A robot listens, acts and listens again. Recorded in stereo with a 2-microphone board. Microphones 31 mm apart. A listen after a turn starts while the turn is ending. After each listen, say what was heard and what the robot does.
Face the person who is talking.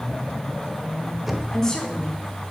Turn 30° left.
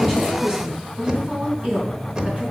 So it is at 40° right. Turn 40° right.
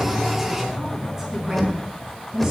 The woman speaking is now 15° right. Turn 15° right.
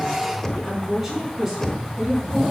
Found it: a woman speaking, straight ahead, over 4 m away.